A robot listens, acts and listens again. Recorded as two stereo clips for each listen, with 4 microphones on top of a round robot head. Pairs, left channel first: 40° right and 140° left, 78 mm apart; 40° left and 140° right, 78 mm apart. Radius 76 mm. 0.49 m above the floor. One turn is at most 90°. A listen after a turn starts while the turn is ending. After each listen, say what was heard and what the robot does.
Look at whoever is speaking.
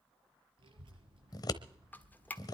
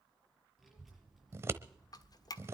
The child speaking: 130° left. Turn 90° left.
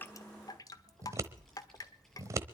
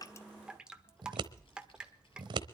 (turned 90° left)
The child speaking is now 45° left. Turn 45° left.
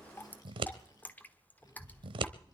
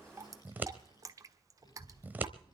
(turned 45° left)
Found it: a child speaking, straight ahead.